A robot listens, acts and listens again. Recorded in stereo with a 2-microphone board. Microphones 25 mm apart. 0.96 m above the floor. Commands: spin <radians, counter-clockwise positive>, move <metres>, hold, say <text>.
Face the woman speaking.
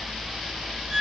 hold
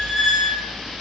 hold
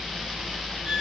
say I can't make out a woman speaking to turn to.